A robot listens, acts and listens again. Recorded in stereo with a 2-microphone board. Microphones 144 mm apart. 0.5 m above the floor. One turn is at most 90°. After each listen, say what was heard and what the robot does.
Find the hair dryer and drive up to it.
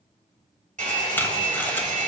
The hair dryer: about 60° right or 120° right. Turn 60° right.
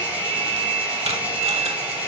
So it is at 10° right. Turn 10° right.
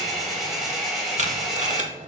Drive 1.0 m forward.
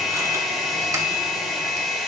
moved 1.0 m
Drive 1.0 m forward.
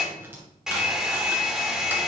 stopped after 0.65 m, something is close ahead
I am next to the hair dryer.